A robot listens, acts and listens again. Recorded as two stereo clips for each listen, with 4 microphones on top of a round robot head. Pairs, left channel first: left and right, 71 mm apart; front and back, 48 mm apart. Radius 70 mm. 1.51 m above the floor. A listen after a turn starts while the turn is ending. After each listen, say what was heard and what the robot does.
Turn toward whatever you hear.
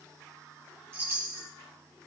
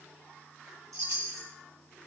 The chime: 150° right. Turn 150° right.
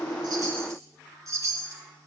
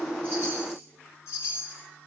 The chime is now 45° right. Turn 45° right.
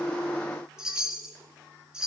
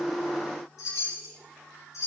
The chime is now 10° right. Turn 10° right.
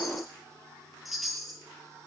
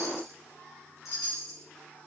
Found it: a chime, straight ahead.